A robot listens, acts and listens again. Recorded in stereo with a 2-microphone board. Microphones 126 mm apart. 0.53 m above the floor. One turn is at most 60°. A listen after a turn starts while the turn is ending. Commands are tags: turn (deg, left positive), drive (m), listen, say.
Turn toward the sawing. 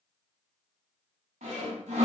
<turn deg="-60"/>
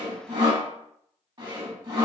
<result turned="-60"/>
<turn deg="-40"/>
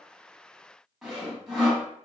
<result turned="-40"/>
<say>Found it: sawing, straight ahead.</say>